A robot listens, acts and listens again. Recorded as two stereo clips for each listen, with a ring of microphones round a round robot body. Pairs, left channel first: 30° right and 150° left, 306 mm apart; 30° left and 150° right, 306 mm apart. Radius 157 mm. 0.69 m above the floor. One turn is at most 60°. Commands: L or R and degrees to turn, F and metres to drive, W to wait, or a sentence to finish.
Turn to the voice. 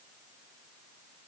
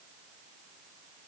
W
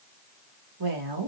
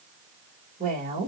L60
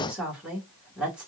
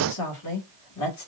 L60
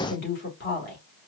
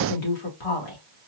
L25
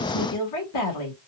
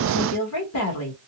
Facing the woman speaking, 1 to 2 m away.